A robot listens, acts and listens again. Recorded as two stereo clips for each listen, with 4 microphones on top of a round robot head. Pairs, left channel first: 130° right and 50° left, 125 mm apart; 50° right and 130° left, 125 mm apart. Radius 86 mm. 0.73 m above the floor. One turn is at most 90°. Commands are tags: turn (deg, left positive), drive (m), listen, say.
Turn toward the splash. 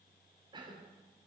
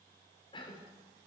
<listen/>
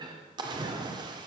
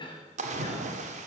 <turn deg="90"/>
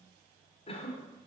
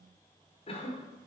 <turn deg="15"/>
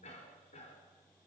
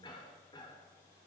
<say>Facing where the splash came from. I can't hear it now.</say>